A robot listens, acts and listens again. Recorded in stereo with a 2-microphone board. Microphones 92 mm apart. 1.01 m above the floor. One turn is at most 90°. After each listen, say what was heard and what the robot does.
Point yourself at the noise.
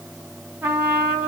The trumpet: about 20° right or 160° right. Turn 20° right.
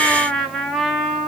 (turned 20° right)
Facing the trumpet.